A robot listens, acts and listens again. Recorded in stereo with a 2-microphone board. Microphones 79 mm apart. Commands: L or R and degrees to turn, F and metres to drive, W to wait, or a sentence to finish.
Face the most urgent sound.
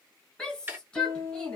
L30
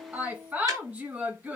R20
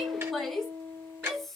Facing the shout, 1 to 2 m away.